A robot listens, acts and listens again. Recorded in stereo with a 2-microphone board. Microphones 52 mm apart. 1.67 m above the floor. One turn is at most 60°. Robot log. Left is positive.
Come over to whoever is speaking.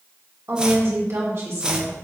note: The woman speaking: about 55° right or 125° right.
cmd yaw -55
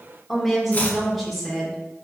cmd fwd 1.0
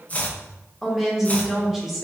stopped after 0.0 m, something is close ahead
end: Something is in my way. I am facing the woman speaking but have not reached it.